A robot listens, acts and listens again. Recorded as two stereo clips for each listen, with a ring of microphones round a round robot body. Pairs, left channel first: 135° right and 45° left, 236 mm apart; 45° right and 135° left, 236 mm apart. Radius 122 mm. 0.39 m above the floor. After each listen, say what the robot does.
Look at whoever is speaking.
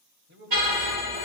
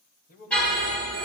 Found it: a man speaking, straight ahead.